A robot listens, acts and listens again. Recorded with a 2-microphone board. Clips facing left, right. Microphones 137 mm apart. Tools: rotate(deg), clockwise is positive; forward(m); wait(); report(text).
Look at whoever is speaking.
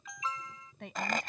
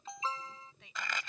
rotate(-60)
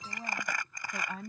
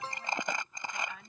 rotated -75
rotate(-40)
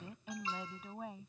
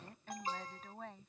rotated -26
rotate(-10)
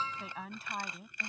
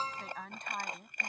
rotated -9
report("Found it: a woman speaking, straight ahead.")